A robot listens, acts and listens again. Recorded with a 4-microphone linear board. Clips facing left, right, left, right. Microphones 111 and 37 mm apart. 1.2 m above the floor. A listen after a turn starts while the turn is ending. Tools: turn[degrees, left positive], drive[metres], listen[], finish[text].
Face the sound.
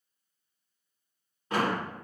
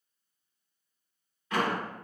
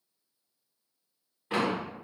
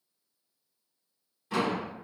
Thought: The door slam: about 35° left or 145° left.
Action: turn[35]
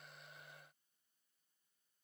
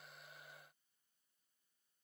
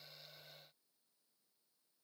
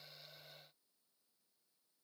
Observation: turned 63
Action: listen[]
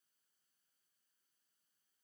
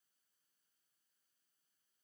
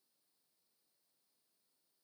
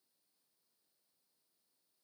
Action: finish[I heard a door slam, but can't make it out now. It was about 30° right or 85° left.]